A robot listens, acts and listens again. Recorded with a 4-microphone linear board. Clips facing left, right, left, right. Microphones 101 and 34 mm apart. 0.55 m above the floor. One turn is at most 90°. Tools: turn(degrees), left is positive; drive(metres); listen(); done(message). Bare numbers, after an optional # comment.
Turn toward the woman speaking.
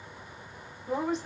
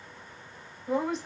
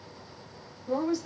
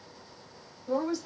turn(30)
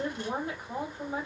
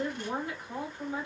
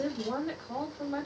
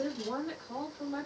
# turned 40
# So it is at 140° left.
turn(90)
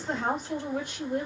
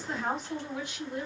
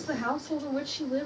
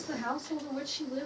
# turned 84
# The woman speaking is now 55° left.
turn(55)
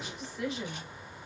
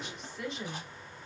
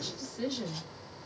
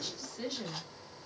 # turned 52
done("Facing the woman speaking, 1 to 2 m away.")